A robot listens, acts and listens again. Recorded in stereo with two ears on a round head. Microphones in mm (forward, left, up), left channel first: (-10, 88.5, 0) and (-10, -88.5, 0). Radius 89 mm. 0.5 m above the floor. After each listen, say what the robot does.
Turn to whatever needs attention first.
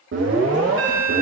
Turn 70° right.
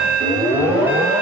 Turn 10° right.
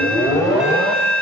Found it: an alarm, straight ahead.